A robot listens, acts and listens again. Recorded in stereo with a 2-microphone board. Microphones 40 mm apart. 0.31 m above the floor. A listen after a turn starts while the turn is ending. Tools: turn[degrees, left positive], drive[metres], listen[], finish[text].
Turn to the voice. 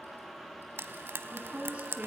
Thought: The woman speaking: about 35° right or 145° right.
Action: turn[-35]
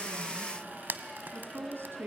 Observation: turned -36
Thought: So it is at 105° right.
Action: turn[-105]
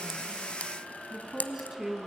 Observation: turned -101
Action: finish[Facing the woman speaking.]